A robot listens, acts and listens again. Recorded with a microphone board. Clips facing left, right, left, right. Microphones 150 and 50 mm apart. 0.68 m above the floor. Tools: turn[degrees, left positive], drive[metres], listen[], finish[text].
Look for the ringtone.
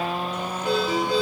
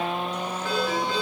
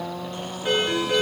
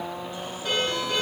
Thought: The ringtone: about 20° left or 160° left.
Action: turn[20]
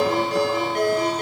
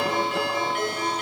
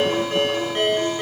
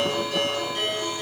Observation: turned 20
Thought: So it is at 140° left.
Action: turn[140]
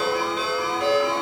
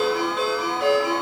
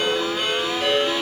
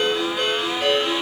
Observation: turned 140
Action: finish[Facing the ringtone.]